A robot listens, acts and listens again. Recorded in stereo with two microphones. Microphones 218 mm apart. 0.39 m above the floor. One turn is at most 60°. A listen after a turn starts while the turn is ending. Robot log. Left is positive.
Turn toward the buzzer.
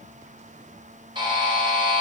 note: The buzzer: about 20° right or 160° right.
cmd yaw -20
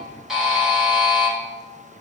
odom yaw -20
end: Found it: a buzzer, straight ahead, 1 to 2 m away.